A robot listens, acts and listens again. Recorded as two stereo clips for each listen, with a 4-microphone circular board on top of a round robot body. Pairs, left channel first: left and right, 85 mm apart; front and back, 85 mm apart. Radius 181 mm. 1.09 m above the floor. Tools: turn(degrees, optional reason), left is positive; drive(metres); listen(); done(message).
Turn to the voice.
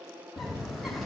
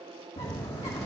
listen()
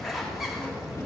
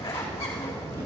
listen()
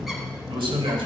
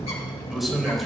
turn(degrees=-90, reason="The man speaking: 90° right.")
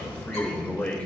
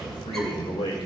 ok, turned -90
turn(degrees=15, reason="The man speaking is now 15° left.")
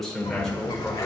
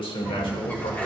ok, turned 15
done("Found it: a man speaking, straight ahead.")